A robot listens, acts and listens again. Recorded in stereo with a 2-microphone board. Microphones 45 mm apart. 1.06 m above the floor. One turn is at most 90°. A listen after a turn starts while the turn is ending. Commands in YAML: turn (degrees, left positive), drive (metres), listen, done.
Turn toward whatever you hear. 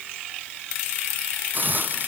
turn: -40
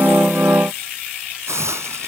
turn: -90
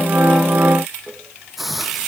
done: "Facing the hiss."